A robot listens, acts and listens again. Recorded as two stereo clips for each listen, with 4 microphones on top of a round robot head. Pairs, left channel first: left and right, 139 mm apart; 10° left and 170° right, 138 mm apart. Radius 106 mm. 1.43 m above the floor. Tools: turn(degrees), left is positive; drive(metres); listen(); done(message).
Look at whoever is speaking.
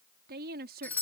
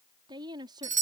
turn(degrees=-105)
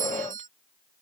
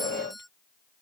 listen()
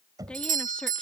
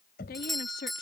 done("Facing the woman speaking.")